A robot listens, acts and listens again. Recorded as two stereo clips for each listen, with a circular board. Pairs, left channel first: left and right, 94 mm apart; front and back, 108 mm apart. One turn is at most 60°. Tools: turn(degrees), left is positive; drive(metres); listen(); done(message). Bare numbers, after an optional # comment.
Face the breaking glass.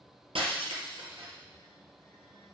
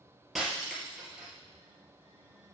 # The breaking glass: 90° right.
turn(-60)
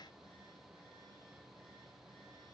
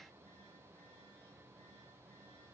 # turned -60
# Nothing new. It was at 30° right.
turn(-30)
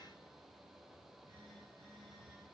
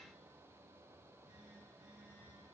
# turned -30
done("I heard breaking glass from this way, but can't make it out now.")